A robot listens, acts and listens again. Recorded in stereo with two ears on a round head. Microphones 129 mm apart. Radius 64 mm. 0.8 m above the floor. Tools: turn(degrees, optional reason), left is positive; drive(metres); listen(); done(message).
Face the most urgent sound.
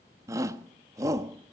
turn(degrees=-20, reason="The shout: about 20° right or 160° right.")
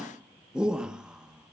done("Found it: a shout, straight ahead.")